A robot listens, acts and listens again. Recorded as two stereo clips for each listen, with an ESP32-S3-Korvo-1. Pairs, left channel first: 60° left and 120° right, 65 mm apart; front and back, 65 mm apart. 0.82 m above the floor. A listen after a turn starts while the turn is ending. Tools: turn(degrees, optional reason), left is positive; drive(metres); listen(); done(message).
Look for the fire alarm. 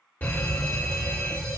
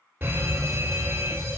turn(degrees=120, reason="The fire alarm: 120° left.")
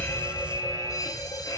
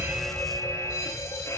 turn(degrees=30, reason="The fire alarm is now 30° left.")
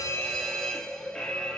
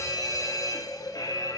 turn(degrees=-25, reason="The fire alarm is now 25° right.")
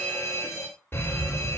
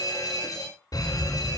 done("Found it: a fire alarm, straight ahead.")